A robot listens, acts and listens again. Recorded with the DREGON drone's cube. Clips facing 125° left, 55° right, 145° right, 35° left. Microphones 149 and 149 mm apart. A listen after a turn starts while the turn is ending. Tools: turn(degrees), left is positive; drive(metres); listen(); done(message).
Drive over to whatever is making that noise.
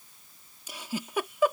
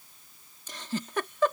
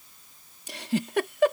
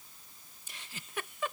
turn(degrees=-155)
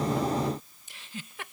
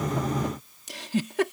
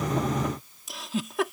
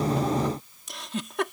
turn(degrees=-60)
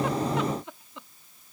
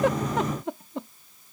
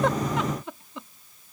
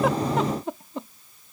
turn(degrees=-15)
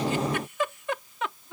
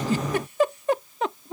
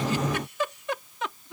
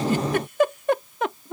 drive(metres=1.0)
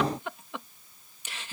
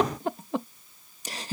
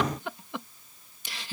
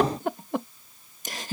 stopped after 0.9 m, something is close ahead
done("Arrived at the giggle, straight ahead.")